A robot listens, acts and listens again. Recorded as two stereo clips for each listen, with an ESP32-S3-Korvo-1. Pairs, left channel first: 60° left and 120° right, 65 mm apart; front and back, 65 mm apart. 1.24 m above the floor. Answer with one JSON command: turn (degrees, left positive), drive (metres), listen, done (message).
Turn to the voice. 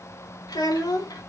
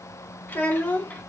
{"turn": 65}
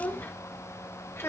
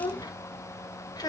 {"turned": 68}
{"turn": 10}
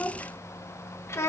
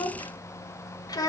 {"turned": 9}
{"turn": 15}
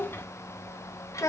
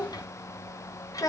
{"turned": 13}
{"turn": 25}
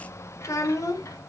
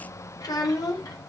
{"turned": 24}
{"turn": 20}
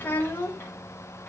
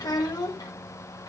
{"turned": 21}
{"done": "Facing the child speaking, 1 to 2 m away."}